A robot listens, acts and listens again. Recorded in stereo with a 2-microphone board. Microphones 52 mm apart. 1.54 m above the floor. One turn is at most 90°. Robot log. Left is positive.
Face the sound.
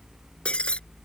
note: The breaking glass: about 20° left or 160° left.
cmd yaw +20
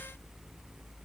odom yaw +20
cmd idle
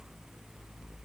end: I heard breaking glass, but can't make it out now. It was about straight ahead or 140° left.